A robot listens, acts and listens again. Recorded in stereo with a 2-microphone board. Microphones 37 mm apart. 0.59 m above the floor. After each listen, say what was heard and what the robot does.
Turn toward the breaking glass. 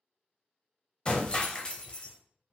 The breaking glass: about 25° left or 155° left. Turn 25° left.
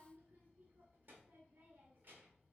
Keep listening.
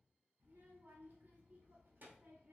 I heard breaking glass, but can't make it out now. It was about straight ahead or 130° left.